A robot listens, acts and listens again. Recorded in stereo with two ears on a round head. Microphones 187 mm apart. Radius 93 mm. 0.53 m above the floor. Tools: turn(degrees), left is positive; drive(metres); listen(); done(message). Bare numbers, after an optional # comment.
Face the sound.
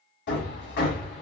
# The hammering: about 55° left or 125° left.
turn(55)
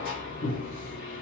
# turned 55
# So it is at 50° left.
turn(50)
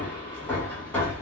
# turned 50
# The hammering is now 10° left.
turn(10)
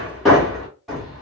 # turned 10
done("Found it: hammering, straight ahead, 1 to 2 m away.")